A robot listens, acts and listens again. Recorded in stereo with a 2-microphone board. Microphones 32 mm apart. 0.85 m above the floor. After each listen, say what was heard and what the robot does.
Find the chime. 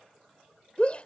Keep listening.
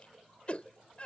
Keep listening.
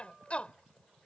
I can't make out a chime to turn to.